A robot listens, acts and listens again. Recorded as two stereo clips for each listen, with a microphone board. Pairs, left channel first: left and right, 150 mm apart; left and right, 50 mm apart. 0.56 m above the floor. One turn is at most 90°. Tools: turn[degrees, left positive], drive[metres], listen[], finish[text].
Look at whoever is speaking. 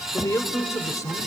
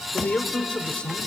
Thought: The man speaking: about 25° left or 155° left.
Action: turn[25]
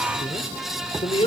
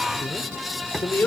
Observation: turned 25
Thought: So it is at 125° left.
Action: turn[90]
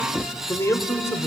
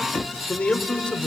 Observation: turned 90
Thought: The man speaking is now 25° left.
Action: turn[25]
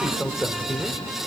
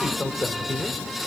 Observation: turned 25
Action: finish[Facing the man speaking, 2 to 4 m away.]